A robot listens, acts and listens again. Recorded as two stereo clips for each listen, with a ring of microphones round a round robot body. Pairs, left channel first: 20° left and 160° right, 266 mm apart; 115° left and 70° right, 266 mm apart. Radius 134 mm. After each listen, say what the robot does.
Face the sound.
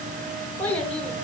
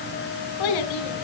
Turn 105° left.
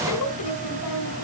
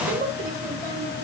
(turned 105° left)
Found it: a child speaking, straight ahead.